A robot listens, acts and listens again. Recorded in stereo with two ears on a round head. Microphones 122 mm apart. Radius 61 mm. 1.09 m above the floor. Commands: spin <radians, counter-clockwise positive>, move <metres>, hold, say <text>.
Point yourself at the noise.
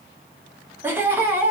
spin -0.26
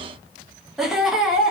say Facing the laughter.